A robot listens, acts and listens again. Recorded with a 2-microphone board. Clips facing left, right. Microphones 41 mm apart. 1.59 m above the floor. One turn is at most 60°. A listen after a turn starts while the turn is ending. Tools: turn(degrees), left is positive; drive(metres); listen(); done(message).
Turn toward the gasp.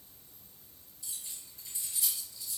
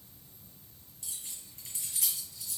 listen()
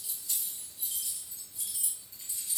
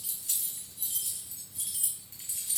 listen()
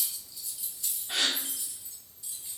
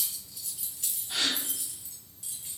turn(degrees=50)
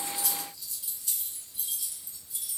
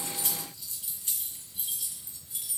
listen()
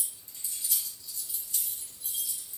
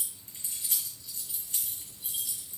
done("I heard a gasp, but can't make it out now. It was about straight ahead or 80° left.")